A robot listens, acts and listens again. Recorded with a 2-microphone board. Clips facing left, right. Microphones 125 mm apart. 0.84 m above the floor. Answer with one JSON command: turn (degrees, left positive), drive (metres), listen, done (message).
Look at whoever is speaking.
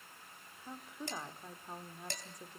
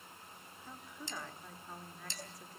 {"turn": 20}
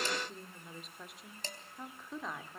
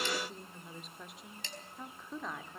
{"done": "Found it: a woman speaking, straight ahead."}